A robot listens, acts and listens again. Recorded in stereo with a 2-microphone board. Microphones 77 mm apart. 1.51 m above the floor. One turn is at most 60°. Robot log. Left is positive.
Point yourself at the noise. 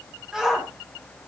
cmd yaw -30
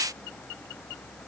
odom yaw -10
cmd idle
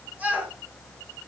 note: So it is at 160° right.
cmd yaw -60
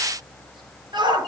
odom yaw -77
note: The shout is now 80° right.
cmd yaw -60
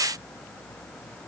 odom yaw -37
note: Nothing new. It was at 45° right.
cmd yaw -45
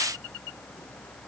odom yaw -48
cmd idle
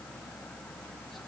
end: Facing where the shout came from. I can't hear it now.